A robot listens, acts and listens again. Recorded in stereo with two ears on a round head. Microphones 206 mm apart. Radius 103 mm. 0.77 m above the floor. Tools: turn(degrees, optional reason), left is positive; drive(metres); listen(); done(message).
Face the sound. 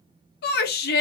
turn(degrees=45, reason="The shout: about 45° left or 135° left.")
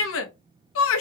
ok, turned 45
turn(degrees=80, reason="So it is at 80° left.")
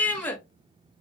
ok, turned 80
turn(degrees=10, reason="The shout is now 10° left.")
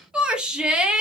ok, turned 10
done("Found it: a shout, straight ahead.")